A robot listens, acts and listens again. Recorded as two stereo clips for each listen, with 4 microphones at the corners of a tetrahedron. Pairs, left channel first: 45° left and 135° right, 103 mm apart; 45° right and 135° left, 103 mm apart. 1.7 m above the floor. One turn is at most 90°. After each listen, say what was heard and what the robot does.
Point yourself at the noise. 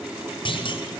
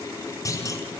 The clunk: 10° left. Turn 10° left.
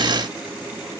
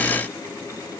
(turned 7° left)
Facing where the clunk came from. I can't hear it now.